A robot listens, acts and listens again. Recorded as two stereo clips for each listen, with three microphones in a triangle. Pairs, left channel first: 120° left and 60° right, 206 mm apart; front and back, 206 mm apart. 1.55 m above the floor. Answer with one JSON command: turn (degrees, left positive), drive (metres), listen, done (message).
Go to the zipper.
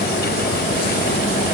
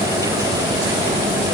{"listen": true}
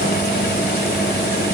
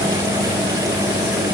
{"listen": true}
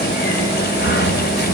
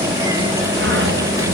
{"done": "I can't make out a zipper, only a sliding door."}